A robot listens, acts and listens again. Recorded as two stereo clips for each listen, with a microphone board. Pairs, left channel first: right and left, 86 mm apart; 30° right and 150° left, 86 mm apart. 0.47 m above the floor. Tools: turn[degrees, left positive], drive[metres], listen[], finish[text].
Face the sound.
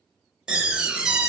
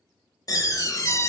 Thought: The door slam: 10° left.
Action: turn[10]
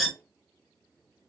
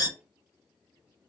Action: finish[Found it: a door slam, straight ahead.]